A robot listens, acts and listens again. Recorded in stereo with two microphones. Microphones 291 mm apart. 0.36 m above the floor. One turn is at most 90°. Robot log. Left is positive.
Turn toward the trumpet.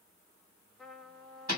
cmd yaw +30
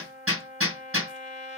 note: So it is at 150° left.
cmd yaw +90
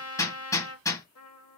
note: The trumpet is now 85° left.
cmd yaw +85
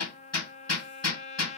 note: The trumpet is now 30° left.
cmd yaw +30
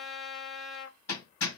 end: Found it: a trumpet, straight ahead, under 1 m away.